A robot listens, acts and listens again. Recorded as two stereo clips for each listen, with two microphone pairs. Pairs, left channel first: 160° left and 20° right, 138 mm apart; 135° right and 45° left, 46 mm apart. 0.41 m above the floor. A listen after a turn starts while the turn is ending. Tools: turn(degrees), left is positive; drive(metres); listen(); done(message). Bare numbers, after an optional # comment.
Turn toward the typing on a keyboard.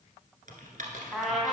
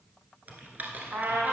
# The typing on a keyboard: 10° right.
turn(-10)
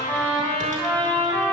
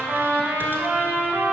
listen()
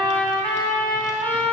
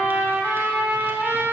listen()
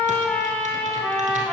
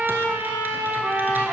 done("Facing where the typing on a keyboard came from. I can't hear it now.")